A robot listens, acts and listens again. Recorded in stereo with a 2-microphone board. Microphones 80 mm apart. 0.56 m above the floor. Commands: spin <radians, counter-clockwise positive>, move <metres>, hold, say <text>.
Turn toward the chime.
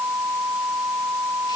hold
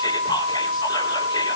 hold
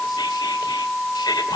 say I can't make out a chime to turn to.